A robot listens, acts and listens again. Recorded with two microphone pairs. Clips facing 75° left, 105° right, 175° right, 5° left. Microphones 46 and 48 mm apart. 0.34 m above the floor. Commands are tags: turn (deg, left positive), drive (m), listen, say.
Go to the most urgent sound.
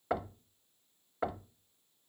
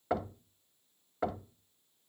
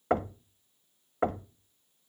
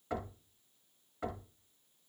<listen/>
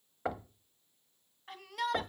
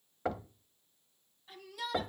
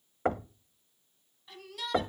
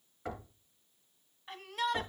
<turn deg="55"/>
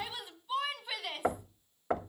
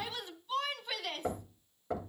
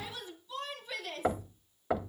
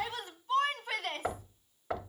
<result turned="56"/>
<drive m="1.0"/>
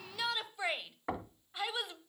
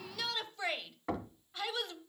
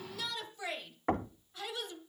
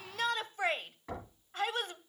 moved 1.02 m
<drive m="1.0"/>
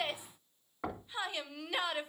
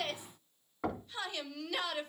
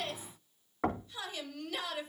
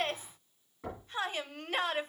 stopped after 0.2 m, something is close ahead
<turn deg="15"/>
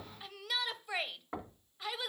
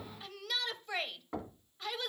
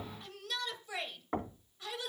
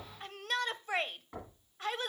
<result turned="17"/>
<say>I am next to the shout.</say>